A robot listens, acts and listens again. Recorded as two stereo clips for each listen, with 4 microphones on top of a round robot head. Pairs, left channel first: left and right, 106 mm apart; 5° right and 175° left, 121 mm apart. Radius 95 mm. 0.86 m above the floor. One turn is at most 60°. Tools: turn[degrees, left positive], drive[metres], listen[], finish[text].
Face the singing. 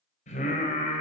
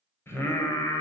Thought: The singing: 60° left.
Action: turn[60]
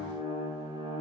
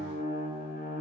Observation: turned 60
Thought: The singing is now 30° right.
Action: turn[-30]
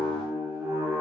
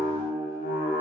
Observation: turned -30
Thought: The singing is now 20° right.
Action: turn[-20]
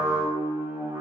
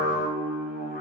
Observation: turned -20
Thought: The singing is now 20° right.
Action: turn[-20]
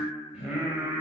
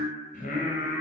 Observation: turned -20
Thought: The singing is now 10° right.
Action: turn[-10]
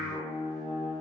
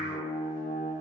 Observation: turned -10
Action: finish[Found it: singing, straight ahead, 2 to 4 m away.]